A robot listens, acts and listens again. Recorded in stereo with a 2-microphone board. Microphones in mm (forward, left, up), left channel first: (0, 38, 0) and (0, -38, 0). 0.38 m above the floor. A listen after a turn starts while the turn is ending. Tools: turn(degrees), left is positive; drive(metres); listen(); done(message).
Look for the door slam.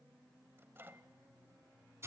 listen()
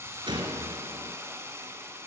turn(degrees=-90)
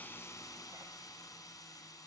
done("I heard a door slam from this way, but can't make it out now.")